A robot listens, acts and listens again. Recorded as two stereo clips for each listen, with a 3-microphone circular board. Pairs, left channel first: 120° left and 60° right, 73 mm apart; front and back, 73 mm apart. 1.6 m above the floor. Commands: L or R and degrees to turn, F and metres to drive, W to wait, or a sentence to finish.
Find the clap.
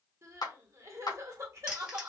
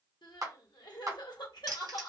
L140
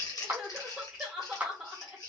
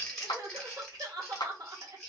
Found it: a clap, straight ahead.